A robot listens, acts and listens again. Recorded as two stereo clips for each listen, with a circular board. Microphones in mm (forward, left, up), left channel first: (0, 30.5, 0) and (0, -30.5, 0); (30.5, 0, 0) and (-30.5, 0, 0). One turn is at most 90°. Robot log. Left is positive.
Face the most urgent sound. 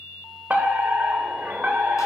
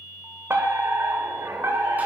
note: The fire alarm: 145° right.
cmd yaw -90
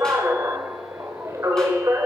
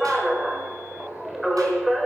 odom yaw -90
note: The fire alarm is now 90° right.
cmd yaw -90
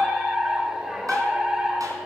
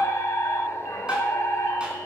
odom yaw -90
note: The fire alarm is now 10° right.
cmd yaw -10
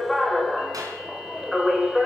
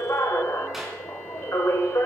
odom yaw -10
end: Facing the fire alarm, 2 to 4 m away.